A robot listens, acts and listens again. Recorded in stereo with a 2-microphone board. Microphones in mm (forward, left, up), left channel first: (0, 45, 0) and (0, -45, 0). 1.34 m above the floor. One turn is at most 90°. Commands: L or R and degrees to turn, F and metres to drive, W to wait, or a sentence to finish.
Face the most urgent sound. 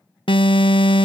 L90
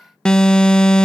L10
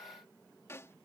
W
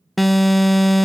Found it: an alarm, straight ahead.